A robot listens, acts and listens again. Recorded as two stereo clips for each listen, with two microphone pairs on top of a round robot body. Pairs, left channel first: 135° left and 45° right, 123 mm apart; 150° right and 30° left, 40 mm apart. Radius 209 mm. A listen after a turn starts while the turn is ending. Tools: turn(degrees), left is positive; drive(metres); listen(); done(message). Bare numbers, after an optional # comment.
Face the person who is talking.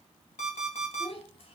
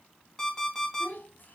# The child speaking: 175° left.
turn(175)
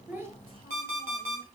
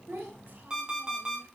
listen()
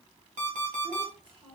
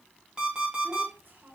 done("Facing the child speaking.")